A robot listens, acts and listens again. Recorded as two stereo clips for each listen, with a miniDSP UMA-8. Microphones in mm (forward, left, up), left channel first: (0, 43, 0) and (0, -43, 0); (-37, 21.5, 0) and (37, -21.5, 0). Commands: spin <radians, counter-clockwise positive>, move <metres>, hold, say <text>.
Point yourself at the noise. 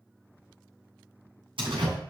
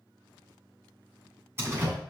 spin -1.57
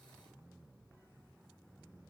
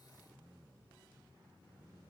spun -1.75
spin 0.17
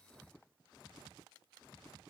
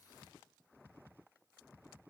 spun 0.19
say I heard a door slam from this way, but can't make it out now.